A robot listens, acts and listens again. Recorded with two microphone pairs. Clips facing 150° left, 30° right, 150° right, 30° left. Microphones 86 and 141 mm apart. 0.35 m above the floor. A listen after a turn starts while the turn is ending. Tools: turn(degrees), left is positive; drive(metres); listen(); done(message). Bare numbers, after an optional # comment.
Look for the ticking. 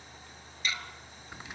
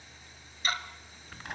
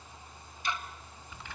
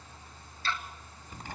# The ticking: 75° right.
turn(-75)
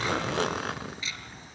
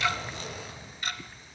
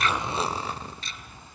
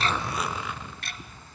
done("Found it: ticking, straight ahead.")